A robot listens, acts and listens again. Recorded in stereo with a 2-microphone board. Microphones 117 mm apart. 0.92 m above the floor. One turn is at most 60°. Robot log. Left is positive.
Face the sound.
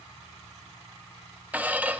cmd yaw -30
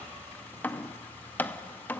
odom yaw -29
note: So it is at 15° left.
cmd yaw +15
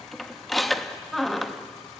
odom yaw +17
end: Found it: a squeak, straight ahead, under 1 m away.